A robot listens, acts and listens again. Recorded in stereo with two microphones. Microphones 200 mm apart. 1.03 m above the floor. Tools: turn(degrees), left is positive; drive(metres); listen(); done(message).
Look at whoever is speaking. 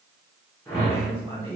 turn(degrees=-25)
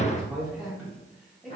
done("Found it: a man speaking, straight ahead.")